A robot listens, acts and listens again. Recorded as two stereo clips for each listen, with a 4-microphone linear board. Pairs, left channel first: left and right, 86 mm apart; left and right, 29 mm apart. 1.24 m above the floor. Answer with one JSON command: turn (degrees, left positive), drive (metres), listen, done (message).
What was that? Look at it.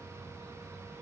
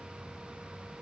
{"listen": true}
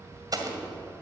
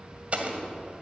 {"turn": -45}
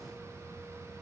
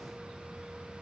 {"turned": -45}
{"listen": true}
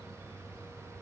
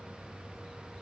{"done": "I heard an explosion, but can't make it out now. It was about straight ahead or 90° right."}